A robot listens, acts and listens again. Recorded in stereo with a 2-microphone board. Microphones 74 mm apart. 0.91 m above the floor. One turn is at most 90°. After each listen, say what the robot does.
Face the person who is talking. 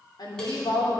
Turn 90° left.
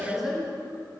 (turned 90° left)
Facing the woman speaking.